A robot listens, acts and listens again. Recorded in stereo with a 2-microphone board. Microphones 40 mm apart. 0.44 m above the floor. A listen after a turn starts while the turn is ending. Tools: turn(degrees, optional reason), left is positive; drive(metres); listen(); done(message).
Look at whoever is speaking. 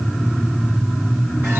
listen()
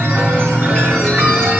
listen()
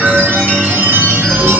done("I can't make out anyone speaking, only a chime.")